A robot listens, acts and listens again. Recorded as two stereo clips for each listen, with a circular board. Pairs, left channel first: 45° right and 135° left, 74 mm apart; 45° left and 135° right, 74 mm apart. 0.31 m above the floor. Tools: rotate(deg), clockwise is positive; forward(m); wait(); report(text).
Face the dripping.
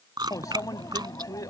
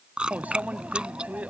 wait()
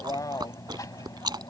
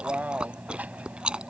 wait()
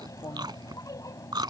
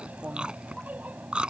report("I can't make out dripping, only chewing and a microwave.")